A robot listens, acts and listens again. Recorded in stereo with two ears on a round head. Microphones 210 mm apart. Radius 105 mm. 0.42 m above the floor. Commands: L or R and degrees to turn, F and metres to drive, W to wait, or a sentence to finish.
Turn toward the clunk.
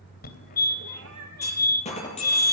L30
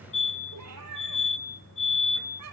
W
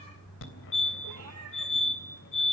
I heard a clunk, but can't make it out now. It was about straight ahead or 120° left.